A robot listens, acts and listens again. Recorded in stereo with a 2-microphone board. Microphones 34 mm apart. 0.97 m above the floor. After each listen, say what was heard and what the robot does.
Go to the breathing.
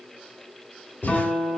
Turn 90° left.
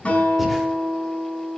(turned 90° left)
Keep listening.
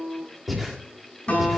Drive 1.0 m forward.
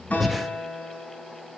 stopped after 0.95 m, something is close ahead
I am next to the breathing.